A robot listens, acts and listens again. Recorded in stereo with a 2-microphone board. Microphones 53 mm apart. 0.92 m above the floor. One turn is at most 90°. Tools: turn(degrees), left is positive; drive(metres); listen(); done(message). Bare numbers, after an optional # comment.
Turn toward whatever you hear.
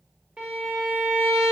# The violin: about 20° right or 160° right.
turn(-20)
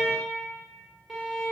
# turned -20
done("Found it: a violin, straight ahead.")